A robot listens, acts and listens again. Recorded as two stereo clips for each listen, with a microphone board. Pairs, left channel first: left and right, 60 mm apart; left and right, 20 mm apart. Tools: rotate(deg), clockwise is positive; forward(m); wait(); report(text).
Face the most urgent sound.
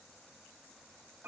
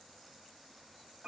wait()
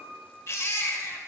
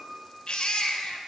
rotate(-55)
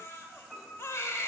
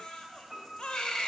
rotate(-60)
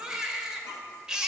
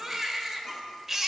rotate(15)
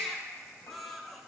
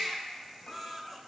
report("Facing the baby crying.")